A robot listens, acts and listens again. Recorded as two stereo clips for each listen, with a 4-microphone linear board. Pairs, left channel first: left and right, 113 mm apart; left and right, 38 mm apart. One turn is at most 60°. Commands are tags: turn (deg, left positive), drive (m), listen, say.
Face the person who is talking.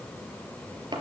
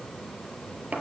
<listen/>
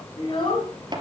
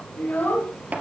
<turn deg="50"/>
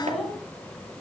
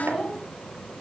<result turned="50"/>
<say>Found it: a child speaking, straight ahead, 2 to 4 m away.</say>